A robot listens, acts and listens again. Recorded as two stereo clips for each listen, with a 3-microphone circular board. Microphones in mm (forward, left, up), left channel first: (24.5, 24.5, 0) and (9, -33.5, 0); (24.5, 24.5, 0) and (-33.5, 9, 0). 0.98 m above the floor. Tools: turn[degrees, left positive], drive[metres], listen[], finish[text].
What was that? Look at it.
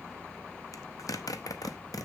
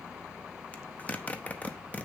Thought: The zipper: 80° left.
Action: turn[80]
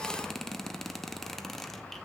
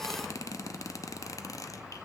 Thought: The zipper is now 10° right.
Action: turn[-10]
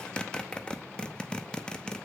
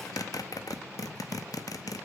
Action: finish[Facing the zipper.]